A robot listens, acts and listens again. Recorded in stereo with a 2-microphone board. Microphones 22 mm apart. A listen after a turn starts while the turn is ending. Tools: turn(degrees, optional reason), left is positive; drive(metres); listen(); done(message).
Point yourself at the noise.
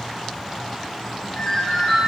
turn(degrees=30)
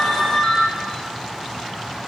turn(degrees=150, reason="So it is at 150° left.")
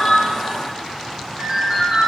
turn(degrees=-45, reason="The ringtone is now 45° right.")
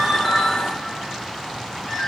turn(degrees=25, reason="The ringtone is now 25° left.")
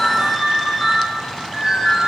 turn(degrees=-10, reason="The ringtone is now 10° right.")
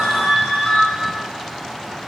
done("Facing the ringtone, 1 to 2 m away.")